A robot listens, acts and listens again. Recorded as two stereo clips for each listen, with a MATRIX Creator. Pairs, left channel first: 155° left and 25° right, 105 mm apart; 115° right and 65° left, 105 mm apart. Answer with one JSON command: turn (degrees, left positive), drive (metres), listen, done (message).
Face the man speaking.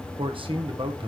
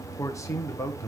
{"turn": -55}
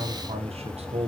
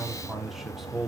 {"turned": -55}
{"turn": -20}
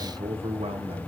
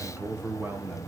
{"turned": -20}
{"done": "Found it: a man speaking, straight ahead."}